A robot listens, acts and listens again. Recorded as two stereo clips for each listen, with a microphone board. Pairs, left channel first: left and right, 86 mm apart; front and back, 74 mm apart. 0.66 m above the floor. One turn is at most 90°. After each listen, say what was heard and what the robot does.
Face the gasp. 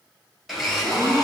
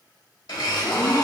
The gasp: 40° right. Turn 40° right.
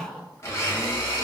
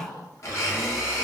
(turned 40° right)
Facing the gasp, 1 to 2 m away.